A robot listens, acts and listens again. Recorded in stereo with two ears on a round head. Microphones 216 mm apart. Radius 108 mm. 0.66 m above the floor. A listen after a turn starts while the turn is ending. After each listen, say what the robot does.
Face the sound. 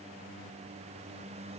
Keep listening.
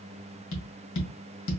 Turn 55° left.
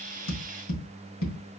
Turn 65° left.
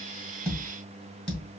Facing the tapping, 2 to 4 m away.